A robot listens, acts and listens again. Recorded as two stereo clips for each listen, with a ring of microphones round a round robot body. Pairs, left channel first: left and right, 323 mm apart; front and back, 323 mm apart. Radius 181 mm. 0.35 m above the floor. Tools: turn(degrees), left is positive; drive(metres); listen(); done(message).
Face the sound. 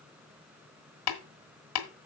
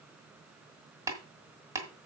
turn(degrees=100)
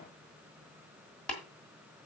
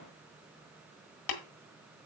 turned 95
done("Facing the tapping, 1 to 2 m away.")